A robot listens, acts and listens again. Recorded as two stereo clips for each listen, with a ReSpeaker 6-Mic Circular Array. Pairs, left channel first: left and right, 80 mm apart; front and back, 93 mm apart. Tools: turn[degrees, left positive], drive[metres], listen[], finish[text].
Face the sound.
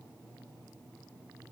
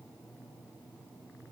Action: listen[]
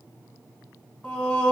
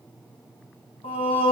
Thought: The singing: 15° left.
Action: turn[15]
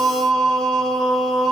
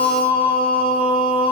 Action: finish[Facing the singing.]